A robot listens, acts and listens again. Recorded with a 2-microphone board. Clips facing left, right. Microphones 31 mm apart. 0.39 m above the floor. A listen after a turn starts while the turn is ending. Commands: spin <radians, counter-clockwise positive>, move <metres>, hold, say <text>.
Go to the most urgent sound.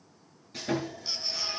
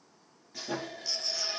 spin 0.35
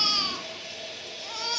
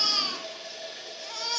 move 1.0
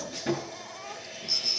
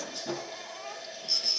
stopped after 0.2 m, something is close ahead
say Blocked. The baby crying is further on, straight ahead.